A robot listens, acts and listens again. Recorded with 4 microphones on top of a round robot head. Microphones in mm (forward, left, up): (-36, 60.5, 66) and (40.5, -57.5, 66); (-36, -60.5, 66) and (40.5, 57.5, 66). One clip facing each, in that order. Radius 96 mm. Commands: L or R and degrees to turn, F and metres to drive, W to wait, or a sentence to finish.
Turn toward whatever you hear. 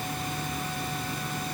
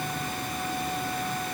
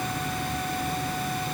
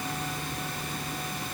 W
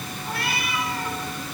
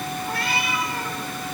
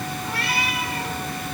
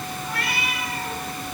R65
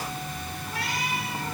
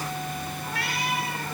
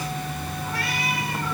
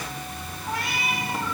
R15
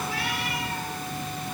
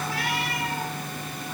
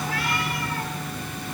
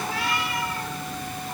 W
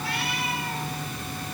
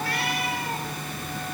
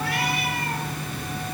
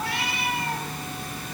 W
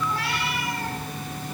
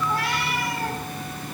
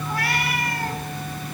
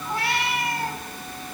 R10
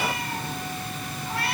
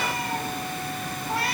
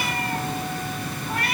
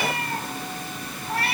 Facing the cat meowing, over 4 m away.